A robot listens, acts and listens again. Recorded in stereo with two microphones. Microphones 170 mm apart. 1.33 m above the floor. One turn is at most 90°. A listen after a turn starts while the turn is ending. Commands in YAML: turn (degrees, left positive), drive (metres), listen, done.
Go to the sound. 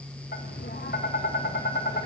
turn: 90
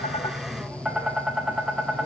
drive: 1.0
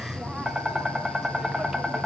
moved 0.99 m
drive: 1.0
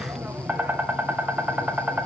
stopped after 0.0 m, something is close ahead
turn: -10
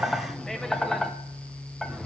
done: "Arrived at the tapping, straight ahead."